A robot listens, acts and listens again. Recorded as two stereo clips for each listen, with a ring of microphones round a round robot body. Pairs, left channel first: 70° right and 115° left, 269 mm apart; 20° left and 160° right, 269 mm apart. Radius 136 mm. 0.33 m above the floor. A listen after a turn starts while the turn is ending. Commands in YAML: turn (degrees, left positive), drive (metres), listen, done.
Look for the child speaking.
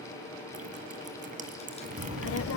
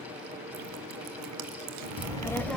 turn: -65
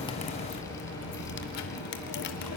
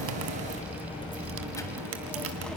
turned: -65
turn: -65
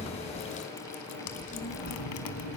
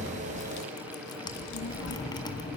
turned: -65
turn: -10
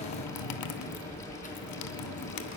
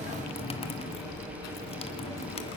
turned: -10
done: "Found it: a child speaking, straight ahead."